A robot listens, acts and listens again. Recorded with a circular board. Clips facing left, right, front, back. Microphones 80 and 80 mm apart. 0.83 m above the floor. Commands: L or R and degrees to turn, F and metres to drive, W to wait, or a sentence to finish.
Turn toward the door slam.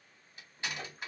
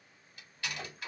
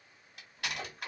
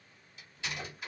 L25
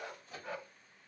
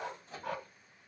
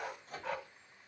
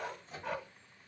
Facing where the door slam came from. I can't hear it now.